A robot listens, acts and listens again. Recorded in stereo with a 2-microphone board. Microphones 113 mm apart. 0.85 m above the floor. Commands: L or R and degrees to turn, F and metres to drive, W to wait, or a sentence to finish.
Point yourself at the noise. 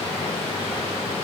W
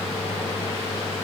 W
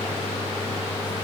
I can't make out anything.